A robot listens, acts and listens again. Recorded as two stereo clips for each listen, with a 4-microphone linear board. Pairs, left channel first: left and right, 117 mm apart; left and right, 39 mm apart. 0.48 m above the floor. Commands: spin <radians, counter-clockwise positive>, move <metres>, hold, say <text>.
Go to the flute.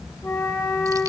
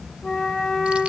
spin 0.35
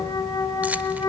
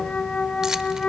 spin 2.44
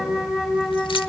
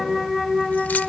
move 1.0
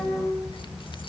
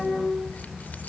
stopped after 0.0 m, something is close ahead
say Something is in my way. I am facing the flute but have not reached it.